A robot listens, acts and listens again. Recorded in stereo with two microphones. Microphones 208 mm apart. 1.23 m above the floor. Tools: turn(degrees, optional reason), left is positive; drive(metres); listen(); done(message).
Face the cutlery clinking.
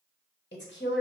listen()
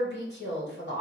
listen()
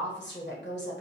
done("I can't make out cutlery clinking to turn to.")